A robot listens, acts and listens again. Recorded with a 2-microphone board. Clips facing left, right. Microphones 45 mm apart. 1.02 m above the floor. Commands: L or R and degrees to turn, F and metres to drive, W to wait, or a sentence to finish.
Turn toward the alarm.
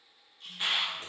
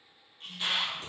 L25
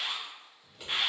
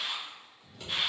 L125
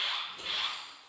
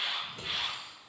Found it: an alarm, straight ahead, 1 to 2 m away.